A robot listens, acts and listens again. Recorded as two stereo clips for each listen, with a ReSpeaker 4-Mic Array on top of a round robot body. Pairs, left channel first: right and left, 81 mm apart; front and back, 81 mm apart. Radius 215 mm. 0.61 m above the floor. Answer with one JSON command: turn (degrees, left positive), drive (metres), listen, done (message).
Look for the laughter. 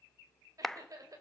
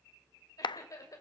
{"turn": 50}
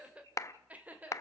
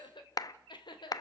{"turn": 20}
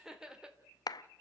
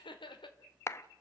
{"turn": 15}
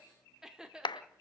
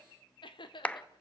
{"turn": 10}
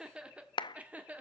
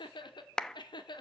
{"turn": 20}
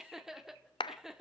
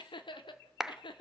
{"done": "Facing the laughter, 2 to 4 m away."}